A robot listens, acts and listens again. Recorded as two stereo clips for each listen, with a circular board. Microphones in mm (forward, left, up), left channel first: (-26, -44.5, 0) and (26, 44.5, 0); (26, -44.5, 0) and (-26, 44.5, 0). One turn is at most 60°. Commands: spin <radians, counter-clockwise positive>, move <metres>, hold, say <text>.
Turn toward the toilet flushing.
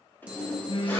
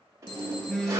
spin 1.05
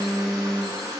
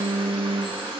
spin 1.05
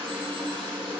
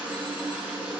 spin 0.87
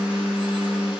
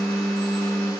hold
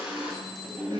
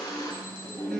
spin -0.26
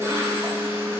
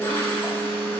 say Facing the toilet flushing, 2 to 4 m away.